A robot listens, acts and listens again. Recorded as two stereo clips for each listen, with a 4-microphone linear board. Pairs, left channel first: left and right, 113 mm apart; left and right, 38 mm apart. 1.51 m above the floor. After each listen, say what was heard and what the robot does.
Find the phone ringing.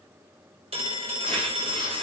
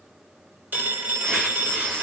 The phone ringing: about 60° right or 120° right. Turn 60° right.
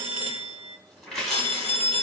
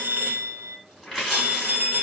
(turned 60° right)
So it is at 60° right. Turn 60° right.
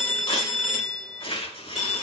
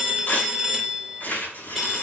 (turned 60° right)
Facing the phone ringing, 2 to 4 m away.